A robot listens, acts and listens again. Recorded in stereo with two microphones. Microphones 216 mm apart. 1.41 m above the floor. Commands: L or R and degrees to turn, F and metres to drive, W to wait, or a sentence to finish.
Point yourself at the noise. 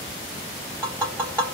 L30
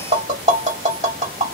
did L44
R35
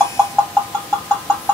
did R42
Found it: tapping, straight ahead, 1 to 2 m away.